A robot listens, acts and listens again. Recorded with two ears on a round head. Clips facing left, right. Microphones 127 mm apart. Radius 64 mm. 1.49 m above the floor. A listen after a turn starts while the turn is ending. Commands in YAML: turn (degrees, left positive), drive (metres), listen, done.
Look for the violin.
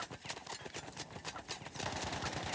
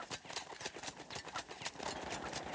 listen: true
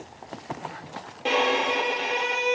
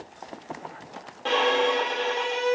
turn: 15
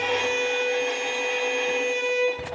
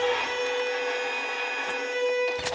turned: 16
turn: 150
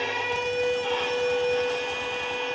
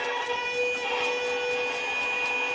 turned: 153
done: "Found it: a violin, straight ahead."